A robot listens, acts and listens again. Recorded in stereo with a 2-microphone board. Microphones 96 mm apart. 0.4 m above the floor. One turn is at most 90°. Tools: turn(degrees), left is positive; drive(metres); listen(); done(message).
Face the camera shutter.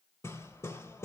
listen()
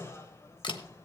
turn(degrees=55)
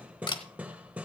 turn(degrees=60)
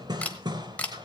turn(degrees=15)
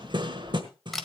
done("Found it: a camera shutter, straight ahead, 1 to 2 m away.")